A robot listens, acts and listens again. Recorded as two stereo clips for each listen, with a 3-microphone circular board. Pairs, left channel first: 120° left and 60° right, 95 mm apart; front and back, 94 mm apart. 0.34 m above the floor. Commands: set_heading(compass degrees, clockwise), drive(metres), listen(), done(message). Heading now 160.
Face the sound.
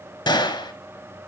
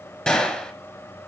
set_heading(80)
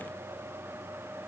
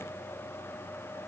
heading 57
set_heading(82)
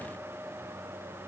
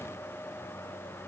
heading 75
done("I heard a gunshot from this way, but can't make it out now.")